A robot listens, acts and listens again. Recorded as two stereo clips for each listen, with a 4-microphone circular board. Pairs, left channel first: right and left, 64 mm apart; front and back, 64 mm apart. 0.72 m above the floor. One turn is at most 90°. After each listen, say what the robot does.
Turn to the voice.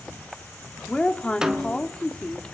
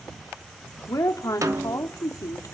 Turn 20° right.
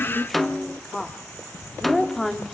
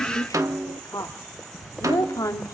Facing the woman speaking.